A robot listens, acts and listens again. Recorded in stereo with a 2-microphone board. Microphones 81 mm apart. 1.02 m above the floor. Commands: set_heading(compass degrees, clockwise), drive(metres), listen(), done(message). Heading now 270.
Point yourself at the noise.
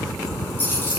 set_heading(240)
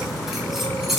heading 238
done("Found it: keys jangling, straight ahead.")